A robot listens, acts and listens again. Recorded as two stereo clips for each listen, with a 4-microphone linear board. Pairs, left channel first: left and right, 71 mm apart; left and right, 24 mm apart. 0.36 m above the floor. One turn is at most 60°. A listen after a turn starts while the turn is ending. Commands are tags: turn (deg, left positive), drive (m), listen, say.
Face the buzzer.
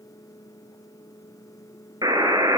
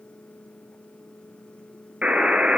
<turn deg="-60"/>
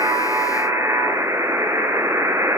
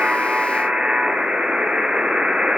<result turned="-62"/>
<turn deg="-45"/>
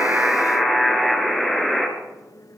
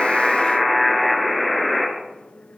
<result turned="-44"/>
<say>Facing the buzzer.</say>